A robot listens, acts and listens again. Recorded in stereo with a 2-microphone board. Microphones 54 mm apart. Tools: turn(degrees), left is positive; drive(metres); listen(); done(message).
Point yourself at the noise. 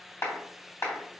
turn(degrees=55)
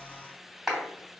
done("Found it: a clap, straight ahead.")